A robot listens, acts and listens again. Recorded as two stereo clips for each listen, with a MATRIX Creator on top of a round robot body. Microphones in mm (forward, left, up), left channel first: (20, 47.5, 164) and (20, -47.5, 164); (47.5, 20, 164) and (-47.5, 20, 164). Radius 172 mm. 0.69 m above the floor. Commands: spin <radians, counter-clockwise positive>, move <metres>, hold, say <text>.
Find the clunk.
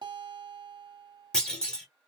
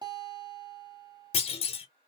spin 0.17
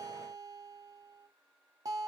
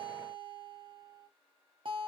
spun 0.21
say Facing where the clunk came from. I can't hear it now.